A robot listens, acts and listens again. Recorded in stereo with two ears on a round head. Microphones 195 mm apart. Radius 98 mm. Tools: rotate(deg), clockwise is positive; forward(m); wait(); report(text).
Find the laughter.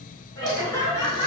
rotate(-30)
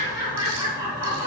rotate(25)
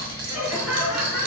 report("Facing the laughter.")